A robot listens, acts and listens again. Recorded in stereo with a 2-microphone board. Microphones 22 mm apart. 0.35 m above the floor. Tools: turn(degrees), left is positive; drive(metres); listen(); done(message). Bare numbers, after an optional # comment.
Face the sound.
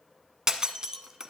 # The breaking glass: about 30° right or 150° right.
turn(-30)
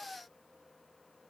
listen()
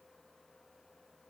done("I heard breaking glass, but can't make it out now. It was about straight ahead or 120° right.")